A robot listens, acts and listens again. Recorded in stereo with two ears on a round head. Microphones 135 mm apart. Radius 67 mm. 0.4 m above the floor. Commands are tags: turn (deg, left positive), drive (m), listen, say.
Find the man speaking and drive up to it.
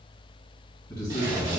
<turn deg="25"/>
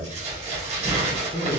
<turn deg="130"/>
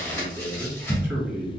<turn deg="-20"/>
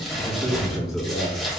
<drive m="1.0"/>
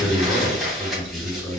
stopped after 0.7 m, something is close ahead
<say>I am next to the man speaking.</say>